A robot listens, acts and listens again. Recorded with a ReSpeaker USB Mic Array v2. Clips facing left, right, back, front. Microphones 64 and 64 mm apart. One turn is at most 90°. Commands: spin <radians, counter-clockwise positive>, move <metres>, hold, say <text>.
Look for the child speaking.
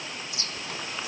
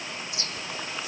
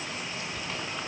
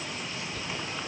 hold
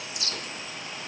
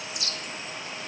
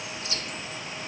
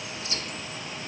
hold
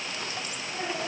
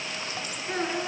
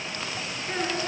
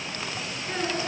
spin -1.57
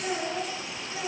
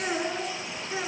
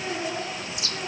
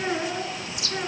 spin -0.70
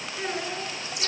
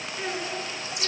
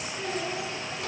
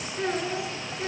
say Facing the child speaking, over 4 m away.